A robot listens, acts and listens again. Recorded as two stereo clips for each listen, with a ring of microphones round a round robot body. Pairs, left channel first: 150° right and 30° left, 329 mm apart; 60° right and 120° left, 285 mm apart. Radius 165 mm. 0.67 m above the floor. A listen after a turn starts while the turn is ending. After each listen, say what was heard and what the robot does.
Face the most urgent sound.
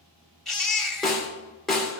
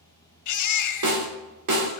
The baby crying: 60° right. Turn 60° right.
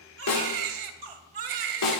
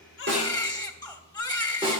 The baby crying is now 15° left. Turn 15° left.
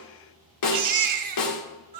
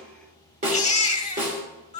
Found it: a baby crying, straight ahead.